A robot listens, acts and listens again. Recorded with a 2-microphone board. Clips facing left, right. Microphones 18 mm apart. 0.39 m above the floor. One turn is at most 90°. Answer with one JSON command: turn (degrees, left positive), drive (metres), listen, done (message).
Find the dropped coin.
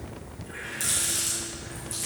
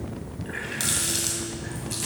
{"listen": true}
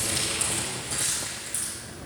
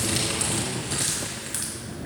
{"listen": true}
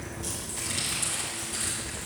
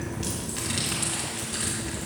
{"done": "I can't make out a dropped coin to turn to."}